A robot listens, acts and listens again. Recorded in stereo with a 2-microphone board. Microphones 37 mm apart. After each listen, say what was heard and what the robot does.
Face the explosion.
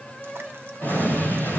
The explosion: about 70° left or 110° left. Turn 70° left.
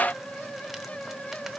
Keep listening.
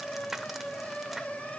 I heard an explosion, but can't make it out now. It was about straight ahead or 40° left.